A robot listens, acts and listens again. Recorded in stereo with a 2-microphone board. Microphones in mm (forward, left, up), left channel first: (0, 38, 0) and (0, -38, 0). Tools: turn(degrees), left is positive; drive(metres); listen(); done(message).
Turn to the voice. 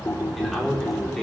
turn(degrees=30)
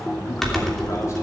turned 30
listen()
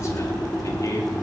turn(degrees=135)
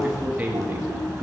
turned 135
turn(degrees=-30)
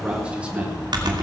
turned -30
listen()
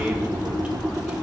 listen()
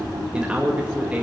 turn(degrees=-15)
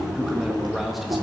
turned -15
done("Facing the man speaking, 2 to 4 m away.")